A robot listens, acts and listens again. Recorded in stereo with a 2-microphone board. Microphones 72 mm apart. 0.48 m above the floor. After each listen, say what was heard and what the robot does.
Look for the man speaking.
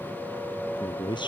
Turn 90° left.
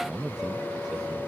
So it is at 10° right. Turn 10° right.
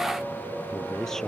Found it: a man speaking, straight ahead.